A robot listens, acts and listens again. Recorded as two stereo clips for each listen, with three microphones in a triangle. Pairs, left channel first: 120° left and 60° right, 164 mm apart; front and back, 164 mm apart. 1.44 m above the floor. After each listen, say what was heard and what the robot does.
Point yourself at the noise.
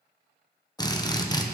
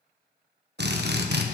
The drill: 170° right. Turn 170° right.
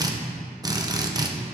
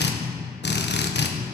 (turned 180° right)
Facing the drill.